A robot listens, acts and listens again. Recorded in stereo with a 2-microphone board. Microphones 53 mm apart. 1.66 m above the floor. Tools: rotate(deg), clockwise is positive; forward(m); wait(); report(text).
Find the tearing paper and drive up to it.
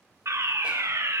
wait()
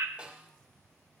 wait()
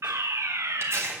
rotate(55)
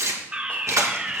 rotate(70)
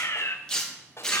rotate(-15)
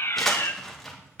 forward(1.0)
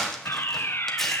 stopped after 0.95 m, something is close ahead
report("Arrived at the tearing paper, straight ahead.")